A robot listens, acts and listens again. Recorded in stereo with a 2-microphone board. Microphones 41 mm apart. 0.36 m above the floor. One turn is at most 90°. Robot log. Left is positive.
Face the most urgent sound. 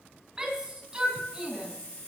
note: The shout: about 20° right or 160° right.
cmd yaw -20
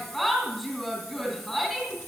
end: Facing the shout.